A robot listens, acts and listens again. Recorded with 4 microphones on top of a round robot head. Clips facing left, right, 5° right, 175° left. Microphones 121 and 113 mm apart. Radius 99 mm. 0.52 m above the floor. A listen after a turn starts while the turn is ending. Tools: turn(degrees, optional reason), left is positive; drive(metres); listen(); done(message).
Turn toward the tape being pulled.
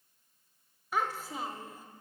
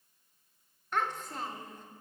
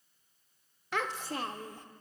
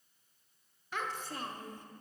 listen()
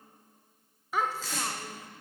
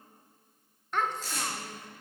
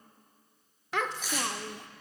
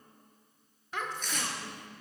turn(degrees=80, reason="The tape being pulled: 80° left.")
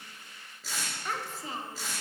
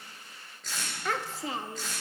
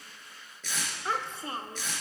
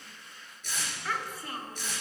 done("Found it: tape being pulled, straight ahead, 2 to 4 m away.")